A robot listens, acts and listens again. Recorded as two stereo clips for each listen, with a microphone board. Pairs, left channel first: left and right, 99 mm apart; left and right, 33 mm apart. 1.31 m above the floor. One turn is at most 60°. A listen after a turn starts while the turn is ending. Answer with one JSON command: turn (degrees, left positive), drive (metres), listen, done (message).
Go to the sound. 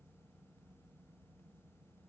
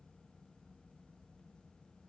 {"listen": true}
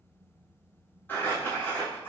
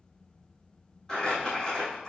{"turn": 20}
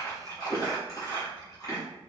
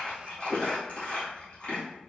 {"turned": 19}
{"turn": 60}
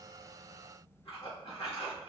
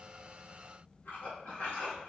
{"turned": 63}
{"turn": 60}
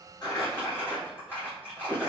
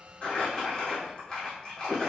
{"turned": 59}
{"turn": 20}
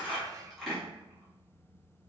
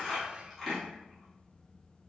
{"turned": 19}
{"drive": 1.0}
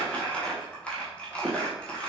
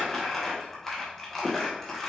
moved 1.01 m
{"turn": 10}
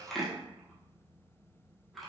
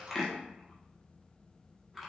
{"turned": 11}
{"drive": 1.0}
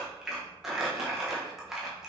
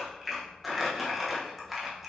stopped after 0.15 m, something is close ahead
{"done": "I am next to the crumpling."}